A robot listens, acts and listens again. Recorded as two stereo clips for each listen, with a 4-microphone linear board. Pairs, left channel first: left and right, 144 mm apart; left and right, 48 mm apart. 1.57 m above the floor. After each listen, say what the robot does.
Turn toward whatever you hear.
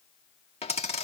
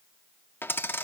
Turn 45° left.
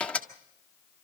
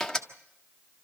Turn 10° left.
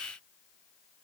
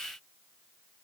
I heard a dropped coin from this way, but can't make it out now.